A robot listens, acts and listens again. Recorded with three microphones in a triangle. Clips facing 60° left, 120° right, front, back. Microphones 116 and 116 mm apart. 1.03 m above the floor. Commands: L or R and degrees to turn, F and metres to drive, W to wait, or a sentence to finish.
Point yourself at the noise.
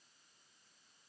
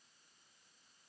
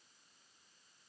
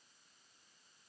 W
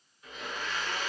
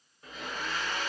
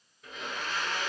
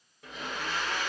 R170
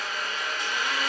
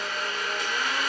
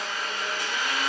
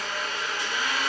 R35
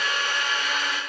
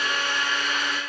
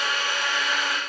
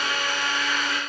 Found it: a blender, straight ahead.